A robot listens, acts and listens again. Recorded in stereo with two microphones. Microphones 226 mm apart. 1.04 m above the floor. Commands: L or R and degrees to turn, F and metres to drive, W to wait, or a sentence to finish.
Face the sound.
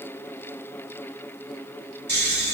R45
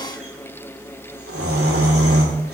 R90
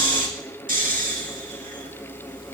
R40
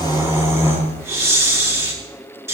R10
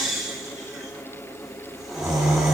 Facing the snoring, 2 to 4 m away.